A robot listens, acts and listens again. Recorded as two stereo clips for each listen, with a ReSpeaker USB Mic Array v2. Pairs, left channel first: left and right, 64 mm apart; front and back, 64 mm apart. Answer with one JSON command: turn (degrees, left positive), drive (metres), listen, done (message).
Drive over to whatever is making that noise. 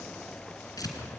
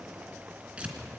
{"turn": 110}
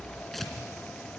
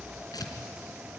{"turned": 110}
{"drive": 1.0}
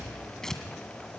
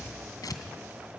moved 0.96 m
{"turn": 10}
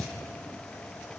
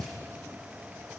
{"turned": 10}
{"drive": 1.0}
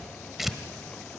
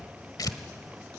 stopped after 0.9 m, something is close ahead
{"done": "I am next to the tearing paper."}